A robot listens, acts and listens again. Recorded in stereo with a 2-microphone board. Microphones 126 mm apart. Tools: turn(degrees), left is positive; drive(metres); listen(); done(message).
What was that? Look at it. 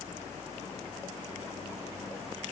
listen()
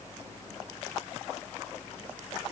listen()
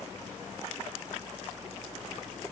done("I can't make out anything to turn to.")